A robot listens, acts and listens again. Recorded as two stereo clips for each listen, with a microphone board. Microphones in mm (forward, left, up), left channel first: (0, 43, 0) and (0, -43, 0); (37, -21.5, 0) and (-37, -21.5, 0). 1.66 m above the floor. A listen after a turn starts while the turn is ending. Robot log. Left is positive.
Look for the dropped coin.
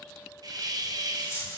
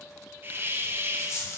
note: The dropped coin: 40° left.
cmd yaw +40
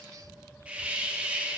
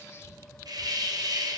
end: I heard a dropped coin from this way, but can't make it out now.